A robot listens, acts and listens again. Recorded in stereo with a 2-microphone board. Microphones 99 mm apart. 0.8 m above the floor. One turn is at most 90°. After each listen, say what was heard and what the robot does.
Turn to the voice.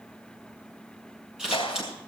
Keep listening.
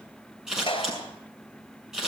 Keep listening.
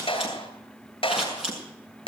I can't make out anyone speaking, only scissors and a clap.